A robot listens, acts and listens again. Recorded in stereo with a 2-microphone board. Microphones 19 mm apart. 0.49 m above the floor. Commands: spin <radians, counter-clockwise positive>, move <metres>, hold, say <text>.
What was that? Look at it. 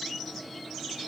hold
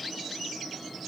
hold
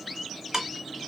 spin -0.44
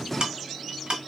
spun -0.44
spin -2.18
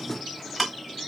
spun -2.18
say Found it: ticking, straight ahead.